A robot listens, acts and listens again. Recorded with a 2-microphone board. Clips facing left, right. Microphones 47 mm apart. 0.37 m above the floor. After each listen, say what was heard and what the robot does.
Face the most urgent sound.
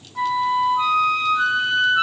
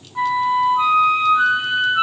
Keep listening.
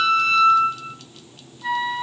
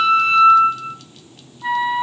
Keep listening.
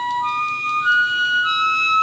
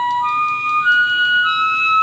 I can't make out anything urgent, only a flute.